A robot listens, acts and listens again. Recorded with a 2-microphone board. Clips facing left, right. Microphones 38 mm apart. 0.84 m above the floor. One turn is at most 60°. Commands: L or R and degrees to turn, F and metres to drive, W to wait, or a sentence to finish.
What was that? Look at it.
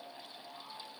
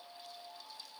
W
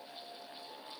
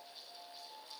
W
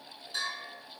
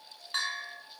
R60
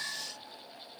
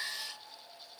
R25
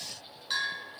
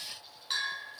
Found it: a bell, straight ahead.